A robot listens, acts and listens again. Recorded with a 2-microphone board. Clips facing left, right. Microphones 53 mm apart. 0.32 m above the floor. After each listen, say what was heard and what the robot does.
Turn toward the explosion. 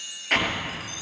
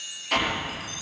The explosion: about 50° left or 130° left. Turn 50° left.
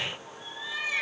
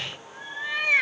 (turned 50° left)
Keep listening.
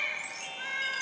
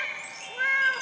I heard an explosion, but can't make it out now. It was about straight ahead or 80° left.